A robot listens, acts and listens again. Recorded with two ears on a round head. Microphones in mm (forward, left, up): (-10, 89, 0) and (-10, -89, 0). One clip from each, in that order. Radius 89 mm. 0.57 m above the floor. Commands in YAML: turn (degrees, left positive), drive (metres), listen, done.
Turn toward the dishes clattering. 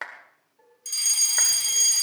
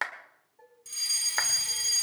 turn: -25
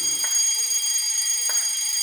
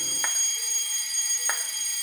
listen: true
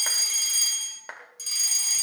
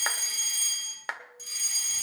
listen: true
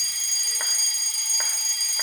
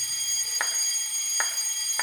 done: "I heard dishes clattering, but can't make it out now. It was about straight ahead or 130° right."